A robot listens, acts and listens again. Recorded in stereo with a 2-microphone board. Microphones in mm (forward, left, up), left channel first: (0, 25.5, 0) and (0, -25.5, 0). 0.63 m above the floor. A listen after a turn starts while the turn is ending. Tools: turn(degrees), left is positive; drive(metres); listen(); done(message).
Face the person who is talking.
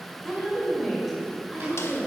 turn(degrees=-30)
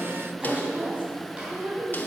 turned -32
turn(degrees=-145)
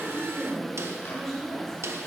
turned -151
turn(degrees=10)
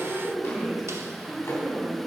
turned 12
done("Facing the woman speaking.")